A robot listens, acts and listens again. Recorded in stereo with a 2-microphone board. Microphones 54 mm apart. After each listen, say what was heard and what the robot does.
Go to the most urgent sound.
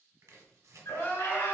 The crying: about 45° left or 135° left. Turn 45° left.
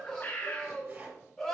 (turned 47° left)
Drive 1.0 m forward.
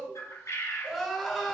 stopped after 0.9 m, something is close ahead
Arrived at the crying, straight ahead.